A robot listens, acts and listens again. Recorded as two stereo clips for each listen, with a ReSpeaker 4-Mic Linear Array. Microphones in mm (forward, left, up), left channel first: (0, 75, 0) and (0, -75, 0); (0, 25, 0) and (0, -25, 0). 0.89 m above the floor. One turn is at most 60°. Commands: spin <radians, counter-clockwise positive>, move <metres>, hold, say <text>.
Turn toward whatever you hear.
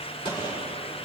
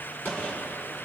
spin 0.52
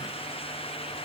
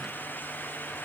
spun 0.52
hold
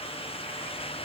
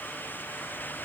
say I heard a gunshot, but can't make it out now. It was about straight ahead or 120° left.